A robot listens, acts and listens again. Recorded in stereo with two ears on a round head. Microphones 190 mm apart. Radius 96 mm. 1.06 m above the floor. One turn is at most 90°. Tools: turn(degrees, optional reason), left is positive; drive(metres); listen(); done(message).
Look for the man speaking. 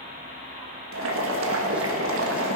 listen()
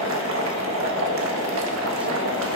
listen()
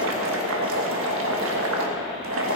done("I can't make out a man speaking to turn to.")